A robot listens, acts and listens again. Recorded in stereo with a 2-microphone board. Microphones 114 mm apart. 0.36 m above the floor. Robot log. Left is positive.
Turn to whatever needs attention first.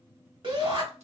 note: The shout: about 55° right or 125° right.
cmd yaw -55
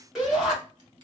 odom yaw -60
end: Facing the shout.